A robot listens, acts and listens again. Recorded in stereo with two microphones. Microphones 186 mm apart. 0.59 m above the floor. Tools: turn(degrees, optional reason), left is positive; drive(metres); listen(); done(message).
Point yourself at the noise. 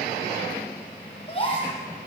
turn(degrees=30, reason="The gasp: about 30° left or 150° left.")
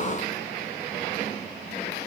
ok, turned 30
listen()
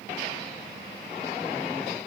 done("I heard a gasp, but can't make it out now. It was about straight ahead or 120° left.")